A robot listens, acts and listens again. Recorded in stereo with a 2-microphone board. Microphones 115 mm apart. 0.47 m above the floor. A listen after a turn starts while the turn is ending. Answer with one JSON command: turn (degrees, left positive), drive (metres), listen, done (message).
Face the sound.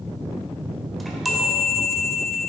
{"turn": 30}
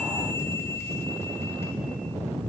{"listen": true}
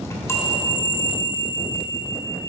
{"turn": 150}
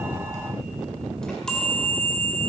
{"done": "Found it: a chime, straight ahead, 1 to 2 m away."}